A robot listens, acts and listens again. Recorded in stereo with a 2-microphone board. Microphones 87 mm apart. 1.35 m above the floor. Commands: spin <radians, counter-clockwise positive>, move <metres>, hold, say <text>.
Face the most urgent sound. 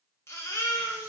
spin 0.52
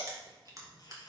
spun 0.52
spin 2.01
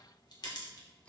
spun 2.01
hold
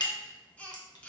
spin 0.35
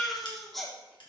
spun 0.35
say Facing the baby crying, 1 to 2 m away.